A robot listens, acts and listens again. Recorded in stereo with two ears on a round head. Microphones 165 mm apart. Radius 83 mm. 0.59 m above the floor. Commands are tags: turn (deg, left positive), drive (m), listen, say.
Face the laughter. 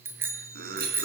<turn deg="-55"/>
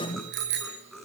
<say>Facing the laughter, over 4 m away.</say>